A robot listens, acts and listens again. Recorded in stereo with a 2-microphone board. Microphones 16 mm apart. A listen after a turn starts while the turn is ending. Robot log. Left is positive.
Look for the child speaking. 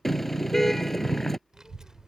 note: The child speaking: about 45° right or 135° right.
cmd yaw -45
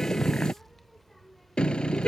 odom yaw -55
end: Facing the child speaking.